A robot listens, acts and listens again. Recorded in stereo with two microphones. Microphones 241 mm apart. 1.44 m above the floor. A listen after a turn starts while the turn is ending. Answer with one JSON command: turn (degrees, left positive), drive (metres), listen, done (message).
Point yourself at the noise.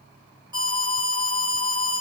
{"turn": -15}
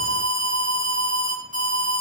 {"turn": -150}
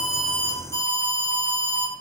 {"turn": -50}
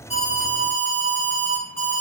{"turn": 10}
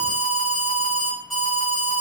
{"done": "Found it: an alarm, straight ahead."}